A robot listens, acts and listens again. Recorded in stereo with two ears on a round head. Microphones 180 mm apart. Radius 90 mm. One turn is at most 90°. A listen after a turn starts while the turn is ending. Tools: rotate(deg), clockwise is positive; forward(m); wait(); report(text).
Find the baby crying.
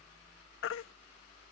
rotate(-65)
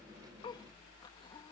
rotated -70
wait()
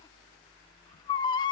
rotate(-25)
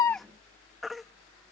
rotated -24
report("Found it: a baby crying, straight ahead.")